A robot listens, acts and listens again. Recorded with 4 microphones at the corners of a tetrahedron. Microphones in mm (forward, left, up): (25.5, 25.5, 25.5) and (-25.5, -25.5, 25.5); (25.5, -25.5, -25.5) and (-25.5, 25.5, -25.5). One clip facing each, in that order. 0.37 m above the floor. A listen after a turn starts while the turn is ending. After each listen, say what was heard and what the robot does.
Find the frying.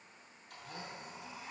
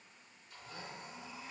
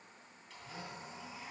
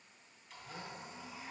Keep listening.
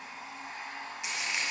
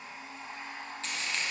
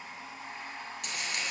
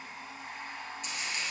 The frying: 30° right. Turn 30° right.
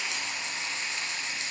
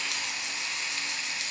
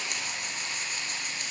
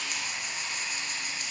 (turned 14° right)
The frying is now 15° right. Turn 15° right.
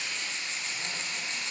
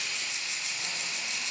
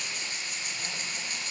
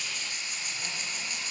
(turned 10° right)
Facing the frying, 1 to 2 m away.